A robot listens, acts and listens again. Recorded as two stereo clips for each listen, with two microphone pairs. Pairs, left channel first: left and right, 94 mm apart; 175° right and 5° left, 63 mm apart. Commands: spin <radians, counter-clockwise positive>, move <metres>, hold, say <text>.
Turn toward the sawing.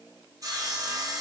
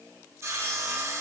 spin -0.70
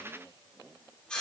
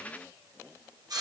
spin 0.17
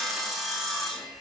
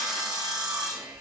say Facing the sawing.